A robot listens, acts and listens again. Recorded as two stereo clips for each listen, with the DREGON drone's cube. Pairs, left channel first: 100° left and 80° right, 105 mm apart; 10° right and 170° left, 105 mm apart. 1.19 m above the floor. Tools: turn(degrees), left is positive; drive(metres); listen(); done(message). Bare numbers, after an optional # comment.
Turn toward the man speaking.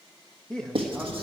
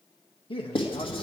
# The man speaking: 15° left.
turn(15)
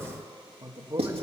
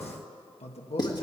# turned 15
# The man speaking is now 20° right.
turn(-20)
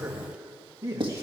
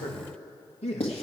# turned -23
# The man speaking is now 20° right.
turn(-20)
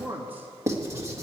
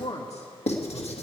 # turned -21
done("Found it: a man speaking, straight ahead.")